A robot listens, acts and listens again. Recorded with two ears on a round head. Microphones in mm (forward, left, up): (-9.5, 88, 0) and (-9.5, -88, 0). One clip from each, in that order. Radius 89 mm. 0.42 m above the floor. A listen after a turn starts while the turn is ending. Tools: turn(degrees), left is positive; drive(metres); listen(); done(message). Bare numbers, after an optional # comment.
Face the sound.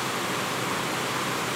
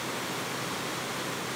listen()
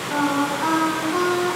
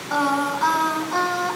# The singing: about 40° right or 140° right.
turn(-40)
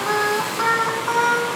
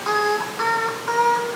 done("Facing the singing, 1 to 2 m away.")